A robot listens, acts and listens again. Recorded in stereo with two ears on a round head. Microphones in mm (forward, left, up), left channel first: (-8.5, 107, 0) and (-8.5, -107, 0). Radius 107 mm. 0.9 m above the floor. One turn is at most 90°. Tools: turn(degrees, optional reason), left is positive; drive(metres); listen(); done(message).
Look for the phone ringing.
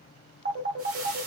turn(degrees=-45, reason="The phone ringing: about 45° right or 135° right.")
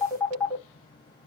done("Found it: a phone ringing, straight ahead.")